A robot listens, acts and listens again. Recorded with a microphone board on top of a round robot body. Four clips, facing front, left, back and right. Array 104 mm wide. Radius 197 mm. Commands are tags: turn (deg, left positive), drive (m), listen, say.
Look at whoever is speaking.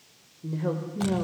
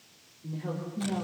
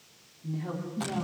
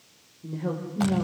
<turn deg="-20"/>
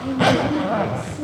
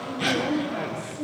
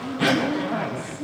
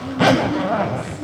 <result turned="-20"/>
<say>Facing the woman speaking.</say>